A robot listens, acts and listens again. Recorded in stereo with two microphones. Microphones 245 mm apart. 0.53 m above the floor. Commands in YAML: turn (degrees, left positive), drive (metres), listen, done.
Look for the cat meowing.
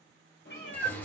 turn: 45
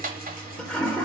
listen: true
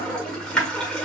listen: true
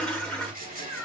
turn: 105
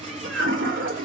listen: true
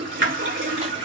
listen: true
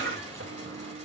done: "Facing where the cat meowing came from. I can't hear it now."